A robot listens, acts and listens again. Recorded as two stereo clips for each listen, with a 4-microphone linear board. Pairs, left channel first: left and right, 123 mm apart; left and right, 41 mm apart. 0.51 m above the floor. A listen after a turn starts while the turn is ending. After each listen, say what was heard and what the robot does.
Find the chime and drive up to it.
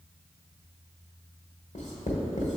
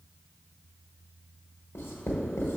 Keep listening.
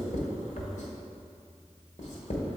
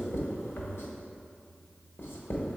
Keep listening.
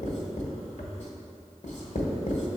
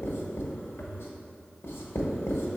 I can't make out a chime to turn to.